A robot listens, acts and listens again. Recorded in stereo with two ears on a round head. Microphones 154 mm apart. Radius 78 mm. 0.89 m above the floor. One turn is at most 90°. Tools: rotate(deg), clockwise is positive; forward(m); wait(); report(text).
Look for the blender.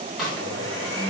rotate(90)
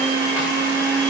report("Found it: a blender, straight ahead, 2 to 4 m away.")